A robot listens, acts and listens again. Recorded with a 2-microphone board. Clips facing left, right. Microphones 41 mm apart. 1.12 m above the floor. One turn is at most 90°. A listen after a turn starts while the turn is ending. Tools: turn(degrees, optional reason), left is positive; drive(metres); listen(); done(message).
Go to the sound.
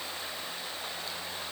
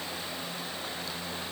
listen()
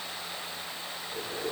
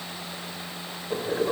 turn(degrees=-55, reason="The boiling: about 55° right or 125° right.")
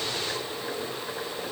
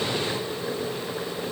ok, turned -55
drive(metres=1.0)
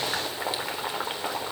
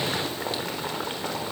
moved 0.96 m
turn(degrees=10, reason="The boiling is now 10° left.")
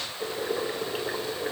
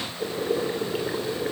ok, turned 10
drive(metres=1.0)
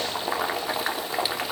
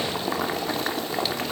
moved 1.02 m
drive(metres=1.0)
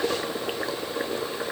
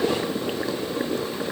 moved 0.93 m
turn(degrees=10, reason="The boiling is now 10° left.")
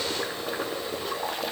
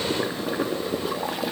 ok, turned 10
drive(metres=1.0)
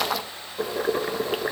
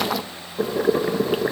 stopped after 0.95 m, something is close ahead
done("Arrived at the boiling, straight ahead.")